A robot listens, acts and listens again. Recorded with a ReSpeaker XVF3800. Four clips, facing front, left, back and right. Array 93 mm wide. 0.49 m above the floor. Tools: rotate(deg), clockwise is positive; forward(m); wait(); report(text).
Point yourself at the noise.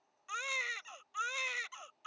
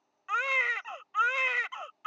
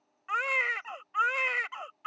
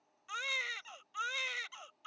rotate(-130)
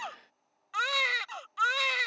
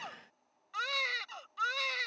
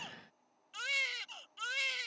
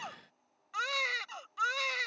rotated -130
report("Found it: a baby crying, straight ahead.")